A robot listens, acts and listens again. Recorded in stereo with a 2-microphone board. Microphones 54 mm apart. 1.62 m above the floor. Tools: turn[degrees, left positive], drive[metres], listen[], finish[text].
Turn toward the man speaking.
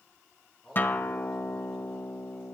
Action: turn[30]
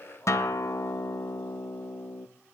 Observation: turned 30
Action: listen[]
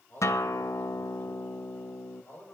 Thought: So it is at 145° left.
Action: turn[145]
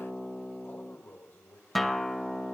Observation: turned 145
Thought: The man speaking is now 40° left.
Action: turn[40]
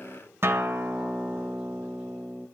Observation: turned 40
Thought: The man speaking is now 15° right.
Action: turn[-15]
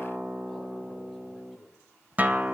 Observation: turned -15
Action: finish[Found it: a man speaking, straight ahead.]